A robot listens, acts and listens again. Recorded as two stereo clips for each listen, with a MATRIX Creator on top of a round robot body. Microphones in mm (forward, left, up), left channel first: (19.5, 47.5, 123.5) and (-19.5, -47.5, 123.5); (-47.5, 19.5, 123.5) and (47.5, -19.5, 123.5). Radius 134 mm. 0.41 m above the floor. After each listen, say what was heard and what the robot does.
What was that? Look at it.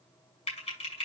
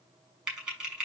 The typing on a keyboard: 60° left. Turn 60° left.
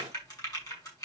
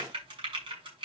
The typing on a keyboard is now 15° left. Turn 15° left.
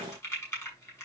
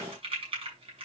Found it: typing on a keyboard, straight ahead, over 4 m away.